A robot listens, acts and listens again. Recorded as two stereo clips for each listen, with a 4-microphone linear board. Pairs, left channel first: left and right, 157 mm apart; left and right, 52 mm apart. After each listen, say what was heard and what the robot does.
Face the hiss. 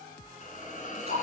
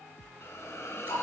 The hiss: about 50° left or 130° left. Turn 50° left.
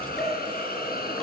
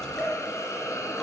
So it is at 80° left. Turn 80° left.
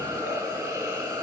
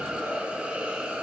The hiss is now 15° right. Turn 15° right.
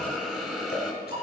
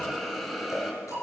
Found it: a hiss, straight ahead.